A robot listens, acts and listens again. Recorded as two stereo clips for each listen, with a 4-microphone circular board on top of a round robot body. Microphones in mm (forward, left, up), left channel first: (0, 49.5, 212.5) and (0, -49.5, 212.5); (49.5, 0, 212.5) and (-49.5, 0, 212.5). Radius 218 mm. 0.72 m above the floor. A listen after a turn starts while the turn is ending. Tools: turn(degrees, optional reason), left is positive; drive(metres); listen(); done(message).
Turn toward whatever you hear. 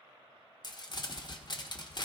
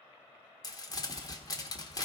turn(degrees=50, reason="The crumpling: 50° left.")
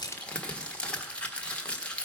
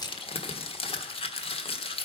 turn(degrees=10, reason="The crumpling is now 10° left.")
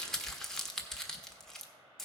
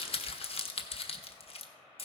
done("Facing the crumpling, 1 to 2 m away.")